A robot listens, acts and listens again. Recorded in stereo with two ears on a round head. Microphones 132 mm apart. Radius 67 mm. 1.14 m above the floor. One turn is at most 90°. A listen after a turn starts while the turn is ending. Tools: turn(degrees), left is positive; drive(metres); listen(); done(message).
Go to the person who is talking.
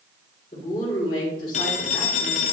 turn(degrees=35)
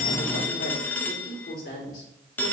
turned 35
turn(degrees=90)
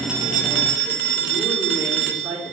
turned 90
turn(degrees=20)
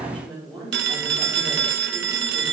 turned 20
drive(metres=1.0)
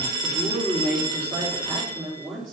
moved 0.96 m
drive(metres=1.0)
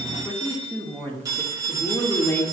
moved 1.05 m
turn(degrees=10)
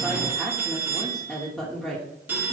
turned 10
drive(metres=1.0)
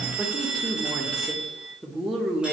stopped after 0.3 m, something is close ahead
done("I am next to the woman speaking.")